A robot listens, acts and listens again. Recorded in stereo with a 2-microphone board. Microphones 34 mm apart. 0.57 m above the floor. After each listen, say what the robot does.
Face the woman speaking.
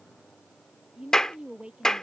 Turn 30° right.
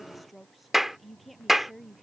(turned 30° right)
Found it: a woman speaking, straight ahead.